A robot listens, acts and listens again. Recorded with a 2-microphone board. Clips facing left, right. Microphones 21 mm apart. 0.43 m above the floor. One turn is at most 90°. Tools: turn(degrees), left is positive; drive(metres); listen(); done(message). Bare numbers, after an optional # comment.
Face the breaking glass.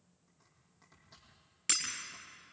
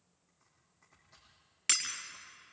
# The breaking glass: about 15° right or 165° right.
turn(-15)
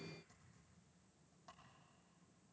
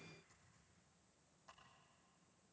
listen()
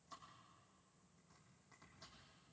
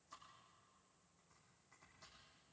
done("I heard breaking glass, but can't make it out now. It was about straight ahead or 150° right.")